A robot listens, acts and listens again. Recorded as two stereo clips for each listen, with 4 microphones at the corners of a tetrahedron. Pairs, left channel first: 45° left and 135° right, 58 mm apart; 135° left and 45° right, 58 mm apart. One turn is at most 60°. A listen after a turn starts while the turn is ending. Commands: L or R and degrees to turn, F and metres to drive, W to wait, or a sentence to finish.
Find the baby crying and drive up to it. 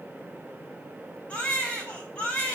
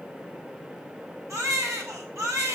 R20
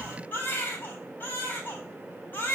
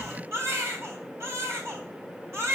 R10
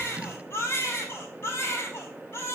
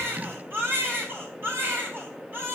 F1.0
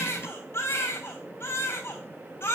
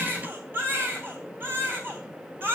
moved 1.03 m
F1.0
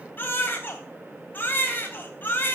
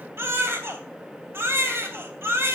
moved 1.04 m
F1.0
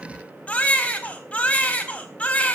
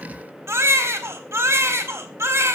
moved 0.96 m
R15
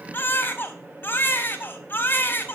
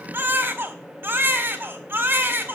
F1.0
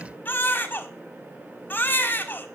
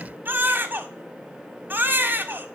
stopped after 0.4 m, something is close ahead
I am next to the baby crying.